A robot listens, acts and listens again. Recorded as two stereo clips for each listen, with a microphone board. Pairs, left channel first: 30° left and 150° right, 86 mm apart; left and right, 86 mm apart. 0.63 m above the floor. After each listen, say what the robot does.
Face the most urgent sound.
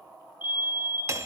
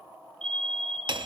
Turn 10° left.
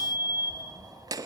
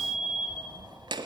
Found it: a fire alarm, straight ahead, over 4 m away.